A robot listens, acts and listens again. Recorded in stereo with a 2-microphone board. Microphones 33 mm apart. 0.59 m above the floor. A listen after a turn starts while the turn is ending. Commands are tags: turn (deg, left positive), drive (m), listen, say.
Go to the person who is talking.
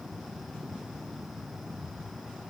<listen/>
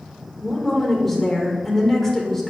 <turn deg="30"/>
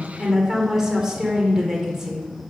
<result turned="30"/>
<turn deg="-20"/>
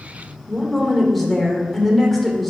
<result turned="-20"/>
<drive m="1.0"/>
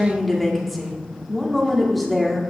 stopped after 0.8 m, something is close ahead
<say>Arrived at the woman speaking, straight ahead.</say>